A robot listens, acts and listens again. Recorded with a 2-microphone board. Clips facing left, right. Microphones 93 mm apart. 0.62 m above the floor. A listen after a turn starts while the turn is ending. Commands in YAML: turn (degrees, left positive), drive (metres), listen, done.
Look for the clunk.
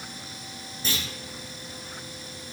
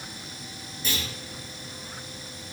turn: 30
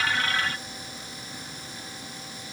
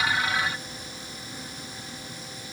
listen: true
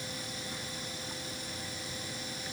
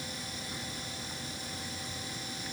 done: "I heard a clunk, but can't make it out now. It was about straight ahead or 120° left."